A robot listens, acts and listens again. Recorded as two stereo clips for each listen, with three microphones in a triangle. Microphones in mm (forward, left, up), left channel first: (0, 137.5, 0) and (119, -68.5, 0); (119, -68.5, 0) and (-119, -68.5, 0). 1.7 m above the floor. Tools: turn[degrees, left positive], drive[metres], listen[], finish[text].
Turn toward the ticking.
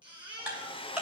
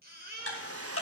Thought: The ticking: 25° left.
Action: turn[25]
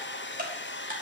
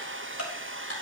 Action: finish[Found it: ticking, straight ahead.]